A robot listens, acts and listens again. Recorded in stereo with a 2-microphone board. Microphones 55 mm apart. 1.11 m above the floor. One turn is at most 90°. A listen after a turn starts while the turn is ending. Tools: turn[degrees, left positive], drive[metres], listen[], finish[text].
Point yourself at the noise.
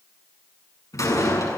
Action: turn[90]
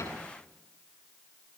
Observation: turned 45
Thought: Nothing new. It was at 45° left.
Action: turn[45]
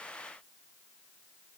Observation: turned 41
Action: finish[I heard a door slam from this way, but can't make it out now.]